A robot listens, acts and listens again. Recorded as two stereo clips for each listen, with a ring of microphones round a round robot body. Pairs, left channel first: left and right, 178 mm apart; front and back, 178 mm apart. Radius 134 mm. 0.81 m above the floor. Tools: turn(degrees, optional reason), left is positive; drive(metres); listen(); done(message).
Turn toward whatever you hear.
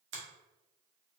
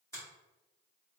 turn(degrees=-80, reason="The finger snap: 80° right.")
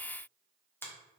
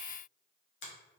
turn(degrees=10, reason="The finger snap is now 10° left.")
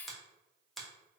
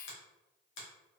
done("Facing the finger snap, 1 to 2 m away.")